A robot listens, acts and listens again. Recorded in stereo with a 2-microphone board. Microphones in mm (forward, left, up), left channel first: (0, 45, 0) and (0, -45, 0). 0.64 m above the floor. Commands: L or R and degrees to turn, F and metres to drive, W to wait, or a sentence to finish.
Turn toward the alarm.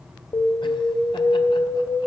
L45
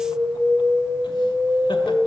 L10
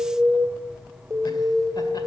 Found it: an alarm, straight ahead.